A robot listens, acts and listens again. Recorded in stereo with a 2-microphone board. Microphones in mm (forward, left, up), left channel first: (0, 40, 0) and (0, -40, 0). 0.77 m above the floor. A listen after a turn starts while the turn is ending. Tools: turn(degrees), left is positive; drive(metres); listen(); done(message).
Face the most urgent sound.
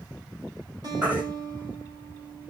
turn(degrees=-25)
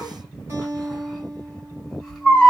done("Facing the baby crying.")